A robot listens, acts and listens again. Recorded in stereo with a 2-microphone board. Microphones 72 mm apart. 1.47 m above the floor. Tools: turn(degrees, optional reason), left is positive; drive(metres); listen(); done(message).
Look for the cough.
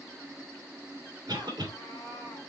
turn(degrees=-90)
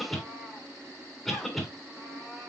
done("Facing the cough, 2 to 4 m away.")